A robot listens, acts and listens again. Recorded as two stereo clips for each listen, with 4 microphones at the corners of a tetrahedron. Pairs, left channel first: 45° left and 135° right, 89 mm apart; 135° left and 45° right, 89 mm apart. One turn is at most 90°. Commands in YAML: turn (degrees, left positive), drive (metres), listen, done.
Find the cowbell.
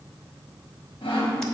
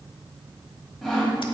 listen: true
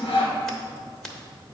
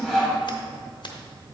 listen: true
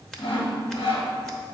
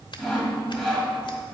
done: "I can't make out a cowbell, only sawing."